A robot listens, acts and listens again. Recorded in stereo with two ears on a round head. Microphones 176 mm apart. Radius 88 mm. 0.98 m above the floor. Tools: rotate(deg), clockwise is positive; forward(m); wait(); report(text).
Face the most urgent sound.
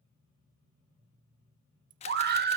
rotate(50)
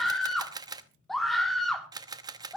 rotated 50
report("Facing the scream, 2 to 4 m away.")